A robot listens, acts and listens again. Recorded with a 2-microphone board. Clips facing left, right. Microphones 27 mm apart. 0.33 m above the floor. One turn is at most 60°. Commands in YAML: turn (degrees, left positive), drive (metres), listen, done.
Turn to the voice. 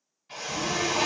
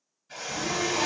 turn: 35
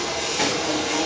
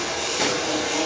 turn: 60
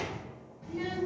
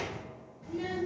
turn: 50
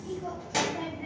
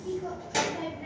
turn: 10
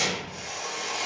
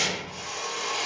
done: "Facing the child speaking, 1 to 2 m away."